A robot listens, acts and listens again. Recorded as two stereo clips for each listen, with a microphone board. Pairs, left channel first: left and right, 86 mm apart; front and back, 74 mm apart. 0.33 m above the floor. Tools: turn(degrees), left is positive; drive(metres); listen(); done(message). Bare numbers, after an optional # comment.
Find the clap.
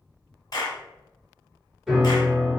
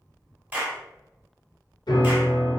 # The clap: 115° left.
turn(115)
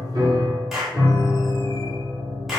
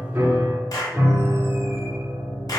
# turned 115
done("Facing the clap, 1 to 2 m away.")